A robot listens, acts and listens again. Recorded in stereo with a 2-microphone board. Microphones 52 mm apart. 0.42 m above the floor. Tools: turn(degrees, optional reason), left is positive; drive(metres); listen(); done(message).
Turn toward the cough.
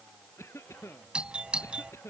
turn(degrees=60, reason="The cough: about 60° left or 120° left.")
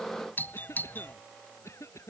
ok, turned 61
turn(degrees=60, reason="So it is at 60° left.")
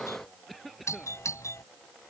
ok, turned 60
done("Found it: a cough, straight ahead.")